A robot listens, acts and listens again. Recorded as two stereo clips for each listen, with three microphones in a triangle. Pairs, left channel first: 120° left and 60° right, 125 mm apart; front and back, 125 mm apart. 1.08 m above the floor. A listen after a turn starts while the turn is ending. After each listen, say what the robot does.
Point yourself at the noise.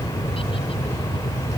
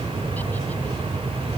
Keep listening.
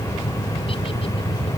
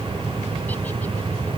Keep listening.
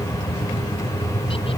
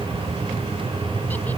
I can't make out anything.